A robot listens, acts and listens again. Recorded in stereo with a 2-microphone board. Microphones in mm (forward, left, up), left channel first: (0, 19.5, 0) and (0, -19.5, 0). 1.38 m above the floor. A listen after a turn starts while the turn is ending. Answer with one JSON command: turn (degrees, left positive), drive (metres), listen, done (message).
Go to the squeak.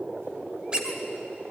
{"turn": -20}
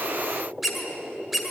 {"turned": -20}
{"drive": 1.0}
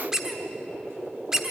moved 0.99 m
{"turn": -15}
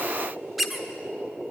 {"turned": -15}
{"drive": 1.0}
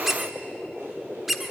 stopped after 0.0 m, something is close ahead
{"done": "I am next to the squeak."}